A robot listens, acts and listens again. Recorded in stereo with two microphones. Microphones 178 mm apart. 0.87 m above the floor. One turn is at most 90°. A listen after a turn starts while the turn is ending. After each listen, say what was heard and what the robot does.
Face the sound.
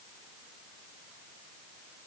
Keep listening.
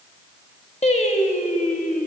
The singing: about 50° left or 130° left. Turn 50° left.
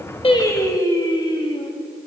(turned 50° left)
So it is at 30° left. Turn 30° left.
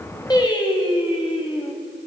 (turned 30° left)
The singing is now 30° left. Turn 30° left.
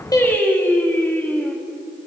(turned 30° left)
The singing is now 10° left. Turn 10° left.
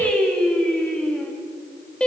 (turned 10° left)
Facing the singing.